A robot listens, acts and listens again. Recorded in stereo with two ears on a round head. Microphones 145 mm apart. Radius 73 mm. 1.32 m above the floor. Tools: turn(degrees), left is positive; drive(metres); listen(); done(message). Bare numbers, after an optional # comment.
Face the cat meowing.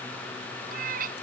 # The cat meowing: about 60° right or 120° right.
turn(-60)
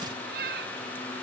# So it is at 65° right.
turn(-65)
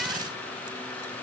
listen()
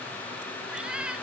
done("Found it: a cat meowing, straight ahead.")